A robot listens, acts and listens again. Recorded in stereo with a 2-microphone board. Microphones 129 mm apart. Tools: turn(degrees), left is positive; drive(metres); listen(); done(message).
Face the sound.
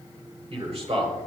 turn(degrees=-50)
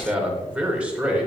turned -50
turn(degrees=-10)
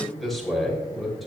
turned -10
done("Found it: a man speaking, straight ahead, 2 to 4 m away.")